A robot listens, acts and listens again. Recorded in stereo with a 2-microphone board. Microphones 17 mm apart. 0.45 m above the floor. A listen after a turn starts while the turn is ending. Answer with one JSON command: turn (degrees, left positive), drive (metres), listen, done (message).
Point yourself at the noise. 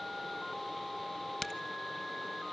{"turn": 30}
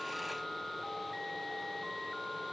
{"listen": true}
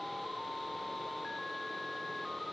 {"done": "I heard a crack, but can't make it out now. It was about straight ahead or 120° left."}